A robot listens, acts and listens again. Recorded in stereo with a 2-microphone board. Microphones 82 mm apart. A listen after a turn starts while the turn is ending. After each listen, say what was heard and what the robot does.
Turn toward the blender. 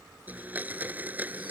The blender: about 20° right or 160° right. Turn 20° right.
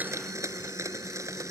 So it is at 140° right. Turn 140° right.
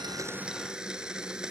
The blender is now 10° right. Turn 10° right.
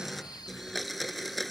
Facing the blender.